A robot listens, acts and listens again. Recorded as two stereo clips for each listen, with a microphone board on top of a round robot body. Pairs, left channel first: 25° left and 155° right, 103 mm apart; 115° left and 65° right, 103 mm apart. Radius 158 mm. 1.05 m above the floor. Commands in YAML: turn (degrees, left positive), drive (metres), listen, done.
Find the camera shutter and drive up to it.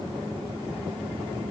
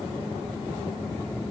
listen: true
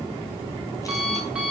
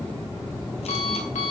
listen: true
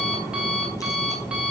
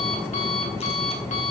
done: "I can't make out a camera shutter to turn to."